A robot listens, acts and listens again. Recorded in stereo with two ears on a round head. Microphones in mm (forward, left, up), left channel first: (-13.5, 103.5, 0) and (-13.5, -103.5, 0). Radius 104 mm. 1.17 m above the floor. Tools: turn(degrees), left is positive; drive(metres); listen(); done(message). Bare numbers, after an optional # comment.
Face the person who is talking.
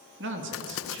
# The man speaking: about 55° right or 125° right.
turn(-55)
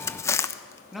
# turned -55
done("Facing the man speaking.")